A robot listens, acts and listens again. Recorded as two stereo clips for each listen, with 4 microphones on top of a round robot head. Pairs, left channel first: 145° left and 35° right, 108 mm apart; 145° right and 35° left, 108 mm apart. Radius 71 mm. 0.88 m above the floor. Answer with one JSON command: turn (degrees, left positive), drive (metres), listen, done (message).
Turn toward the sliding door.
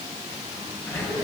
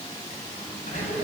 {"turn": -150}
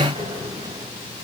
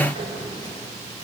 {"done": "Facing the sliding door."}